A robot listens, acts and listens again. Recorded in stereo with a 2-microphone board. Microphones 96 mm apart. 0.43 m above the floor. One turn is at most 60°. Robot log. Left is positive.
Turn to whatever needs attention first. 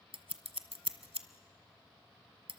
cmd idle
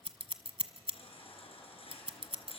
cmd yaw +60
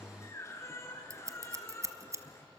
note: So it is at 30° left.
cmd yaw +30
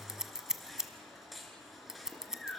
end: Facing the baby crying, 2 to 4 m away.